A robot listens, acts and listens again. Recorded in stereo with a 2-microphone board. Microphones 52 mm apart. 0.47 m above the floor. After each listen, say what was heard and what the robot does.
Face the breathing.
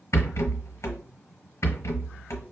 Keep listening.
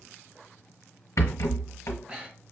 The breathing: about 25° right or 155° right. Turn 25° right.
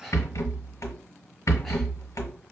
Keep listening.
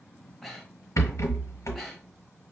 Facing the breathing, under 1 m away.